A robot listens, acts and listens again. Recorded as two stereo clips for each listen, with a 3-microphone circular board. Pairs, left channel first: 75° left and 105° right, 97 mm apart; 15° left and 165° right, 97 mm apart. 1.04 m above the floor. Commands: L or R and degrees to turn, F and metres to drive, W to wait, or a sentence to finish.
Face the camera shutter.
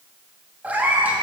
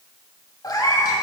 W
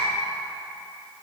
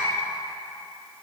W
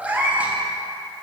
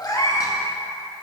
I can't make out a camera shutter, only a cat meowing.